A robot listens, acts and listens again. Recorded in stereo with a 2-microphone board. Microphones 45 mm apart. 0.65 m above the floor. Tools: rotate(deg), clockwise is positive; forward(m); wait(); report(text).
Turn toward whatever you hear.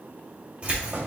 rotate(30)
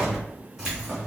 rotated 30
rotate(15)
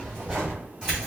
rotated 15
rotate(15)
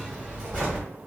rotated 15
report("Found it: keys jangling, straight ahead, 2 to 4 m away.")